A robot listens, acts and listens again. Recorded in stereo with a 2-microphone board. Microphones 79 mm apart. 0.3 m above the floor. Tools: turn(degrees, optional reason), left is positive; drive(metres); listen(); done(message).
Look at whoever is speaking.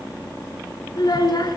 turn(degrees=55, reason="The child speaking: about 55° left or 125° left.")
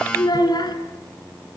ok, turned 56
turn(degrees=65, reason="So it is at 65° left.")
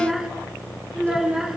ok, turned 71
done("Found it: a child speaking, straight ahead.")